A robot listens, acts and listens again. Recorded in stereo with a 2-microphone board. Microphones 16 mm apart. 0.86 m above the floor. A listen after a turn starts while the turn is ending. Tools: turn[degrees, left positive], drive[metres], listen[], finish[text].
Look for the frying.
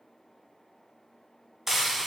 Thought: The frying: about 25° right or 155° right.
Action: turn[-25]
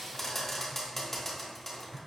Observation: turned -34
Thought: So it is at 10° left.
Action: turn[10]
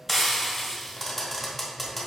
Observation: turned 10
Action: finish[Facing the frying.]